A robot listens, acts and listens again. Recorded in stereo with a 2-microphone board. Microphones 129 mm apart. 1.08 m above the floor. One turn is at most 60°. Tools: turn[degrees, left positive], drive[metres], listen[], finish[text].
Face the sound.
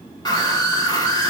Thought: The scream: about 30° left or 150° left.
Action: turn[30]
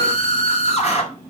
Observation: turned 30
Thought: So it is at 120° left.
Action: turn[60]
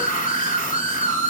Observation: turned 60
Thought: The scream is now 90° left.
Action: turn[60]
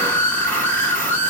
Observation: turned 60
Thought: The scream is now 10° left.
Action: turn[10]
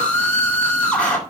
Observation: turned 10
Thought: The scream is now 10° left.
Action: turn[10]
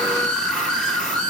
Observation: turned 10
Action: finish[Facing the scream.]